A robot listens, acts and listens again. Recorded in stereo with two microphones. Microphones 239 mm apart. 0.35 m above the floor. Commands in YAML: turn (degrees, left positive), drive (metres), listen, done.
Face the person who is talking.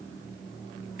listen: true
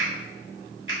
listen: true
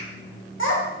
turn: 60
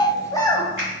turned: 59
turn: 15
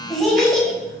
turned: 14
done: "Facing the child speaking, under 1 m away."